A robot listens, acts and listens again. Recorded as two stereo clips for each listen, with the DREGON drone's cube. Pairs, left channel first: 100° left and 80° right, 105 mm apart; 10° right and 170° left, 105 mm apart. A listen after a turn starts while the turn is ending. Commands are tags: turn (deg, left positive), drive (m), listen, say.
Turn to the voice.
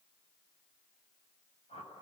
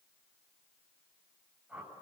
<listen/>
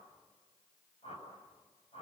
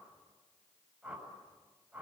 <listen/>
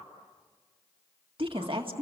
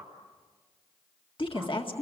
<turn deg="-45"/>
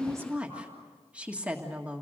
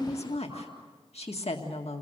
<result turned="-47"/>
<say>Found it: a woman speaking, straight ahead, 2 to 4 m away.</say>